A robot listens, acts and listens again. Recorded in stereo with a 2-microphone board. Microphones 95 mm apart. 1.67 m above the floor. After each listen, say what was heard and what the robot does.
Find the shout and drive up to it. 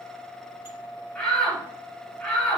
The shout: about 20° left or 160° left. Turn 20° left.
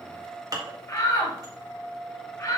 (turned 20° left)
So it is at 140° left. Turn 140° left.
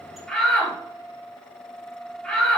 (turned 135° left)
Drive 1.0 m forward.
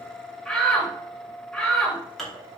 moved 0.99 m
Drive 1.0 m forward.
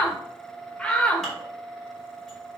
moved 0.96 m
The shout is now 10° left. Turn 10° left.
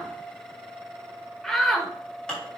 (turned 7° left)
Drive 1.0 m forward.
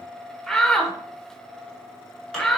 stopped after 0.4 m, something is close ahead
I am next to the shout.